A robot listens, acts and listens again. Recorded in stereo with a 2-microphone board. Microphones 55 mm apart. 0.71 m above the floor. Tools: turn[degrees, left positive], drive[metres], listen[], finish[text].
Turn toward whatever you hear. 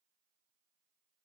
Action: listen[]
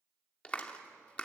Thought: The clap: about 20° left or 160° left.
Action: turn[20]
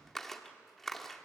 Action: finish[Facing the clap, 1 to 2 m away.]